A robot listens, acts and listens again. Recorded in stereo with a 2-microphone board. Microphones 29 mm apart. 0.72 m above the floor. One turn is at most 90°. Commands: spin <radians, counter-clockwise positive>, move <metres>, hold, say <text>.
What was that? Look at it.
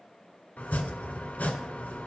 spin 1.05
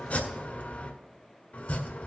spin 1.13
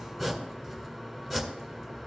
say Facing the chopping, 1 to 2 m away.